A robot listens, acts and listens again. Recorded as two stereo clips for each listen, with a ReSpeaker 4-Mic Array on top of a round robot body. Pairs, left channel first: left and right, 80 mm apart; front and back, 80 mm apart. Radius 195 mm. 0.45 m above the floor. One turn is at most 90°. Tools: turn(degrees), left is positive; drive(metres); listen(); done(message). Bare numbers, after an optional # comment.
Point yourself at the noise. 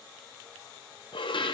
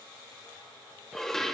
# The dishes clattering: 85° left.
turn(85)
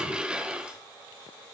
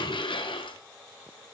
# The dishes clattering is now 10° right.
turn(-10)
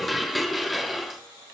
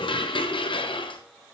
done("Facing the dishes clattering, 1 to 2 m away.")